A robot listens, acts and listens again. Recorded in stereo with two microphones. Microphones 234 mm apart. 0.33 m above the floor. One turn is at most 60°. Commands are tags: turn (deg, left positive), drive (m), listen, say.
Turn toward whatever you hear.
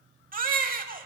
<turn deg="-35"/>
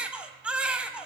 <say>Facing the baby crying, under 1 m away.</say>